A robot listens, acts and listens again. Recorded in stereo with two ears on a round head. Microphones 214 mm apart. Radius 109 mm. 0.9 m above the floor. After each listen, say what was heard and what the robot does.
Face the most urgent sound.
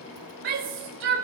The shout: about 60° right or 120° right. Turn 60° right.
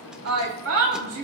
So it is at 60° right. Turn 60° right.
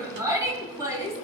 The shout is now 15° right. Turn 15° right.
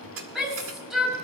Facing the shout.